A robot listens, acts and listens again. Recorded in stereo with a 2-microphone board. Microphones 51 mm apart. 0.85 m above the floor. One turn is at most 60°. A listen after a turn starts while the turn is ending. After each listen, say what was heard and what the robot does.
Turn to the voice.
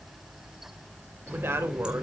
The woman speaking: about 55° right or 125° right. Turn 55° right.
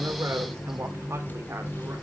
So it is at 55° right. Turn 55° right.
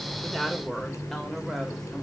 The woman speaking is now 10° left. Turn 10° left.
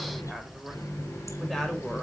Found it: a woman speaking, straight ahead, 2 to 4 m away.